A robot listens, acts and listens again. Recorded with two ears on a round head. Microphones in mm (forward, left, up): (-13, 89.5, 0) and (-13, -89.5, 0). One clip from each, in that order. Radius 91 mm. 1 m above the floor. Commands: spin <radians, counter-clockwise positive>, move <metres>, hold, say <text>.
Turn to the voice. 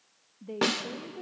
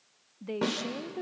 spin -1.05
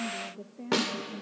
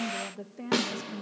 spin -0.87
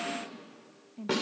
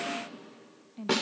spin -0.35
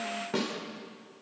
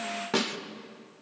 hold
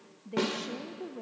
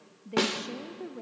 say Found it: a woman speaking, straight ahead, under 1 m away.